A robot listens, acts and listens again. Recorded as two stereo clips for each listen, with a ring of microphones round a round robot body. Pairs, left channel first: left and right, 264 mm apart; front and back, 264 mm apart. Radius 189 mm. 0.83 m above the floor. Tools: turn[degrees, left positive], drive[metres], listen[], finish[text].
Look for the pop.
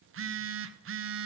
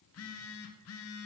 Action: listen[]
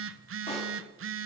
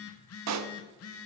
Thought: The pop: 165° left.
Action: turn[165]
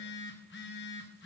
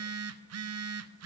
Action: finish[I heard a pop from this way, but can't make it out now.]